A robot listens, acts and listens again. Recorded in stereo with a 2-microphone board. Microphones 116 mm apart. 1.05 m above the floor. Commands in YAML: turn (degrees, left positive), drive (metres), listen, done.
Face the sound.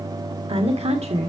turn: -90
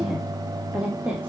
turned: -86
turn: -10
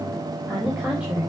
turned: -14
turn: -10
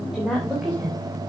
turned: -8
done: "Found it: a woman speaking, straight ahead, 2 to 4 m away."